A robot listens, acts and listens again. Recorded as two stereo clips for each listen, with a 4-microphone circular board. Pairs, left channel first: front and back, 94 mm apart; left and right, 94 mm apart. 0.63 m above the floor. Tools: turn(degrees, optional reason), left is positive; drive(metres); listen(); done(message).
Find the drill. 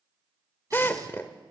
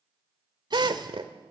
turn(degrees=-65, reason="The drill: 65° right.")
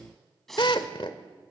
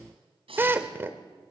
turn(degrees=-25, reason="The drill is now 25° right.")
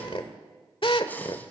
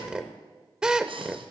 turn(degrees=-10, reason="The drill is now 10° right.")
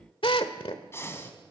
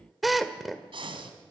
done("Facing the drill.")